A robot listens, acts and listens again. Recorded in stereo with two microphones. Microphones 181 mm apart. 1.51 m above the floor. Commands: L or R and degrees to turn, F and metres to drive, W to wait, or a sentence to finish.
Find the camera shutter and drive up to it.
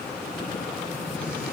W
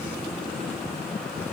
W
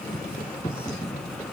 I can't make out a camera shutter to turn to.